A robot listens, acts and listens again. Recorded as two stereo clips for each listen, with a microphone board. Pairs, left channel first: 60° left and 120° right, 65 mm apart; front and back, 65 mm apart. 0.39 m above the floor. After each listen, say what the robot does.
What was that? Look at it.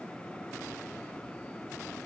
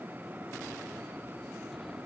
Keep listening.
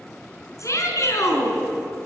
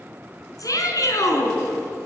Turn 25° left.
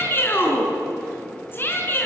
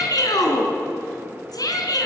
Facing the shout, over 4 m away.